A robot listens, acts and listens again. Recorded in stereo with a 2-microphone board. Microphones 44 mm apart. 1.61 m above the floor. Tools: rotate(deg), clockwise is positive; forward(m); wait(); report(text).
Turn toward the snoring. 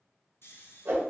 rotate(-65)
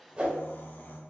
rotate(-50)
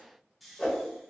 report("Found it: snoring, straight ahead, under 1 m away.")